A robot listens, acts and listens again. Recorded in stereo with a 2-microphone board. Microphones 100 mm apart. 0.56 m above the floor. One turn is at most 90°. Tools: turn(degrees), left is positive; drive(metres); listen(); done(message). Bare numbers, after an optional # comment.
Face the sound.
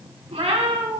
# The cat meowing: about 75° right or 105° right.
turn(-75)
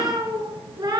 # So it is at 50° right.
turn(-50)
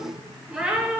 # The cat meowing is now 15° right.
turn(-15)
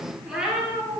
# The cat meowing is now 10° right.
turn(-10)
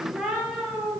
done("Facing the cat meowing.")